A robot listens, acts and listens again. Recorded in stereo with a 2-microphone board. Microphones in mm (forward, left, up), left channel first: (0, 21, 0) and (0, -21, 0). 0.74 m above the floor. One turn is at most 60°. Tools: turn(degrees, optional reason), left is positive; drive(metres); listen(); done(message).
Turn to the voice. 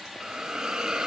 listen()
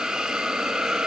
listen()
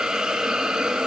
done("I can't make out anyone speaking, only a hiss.")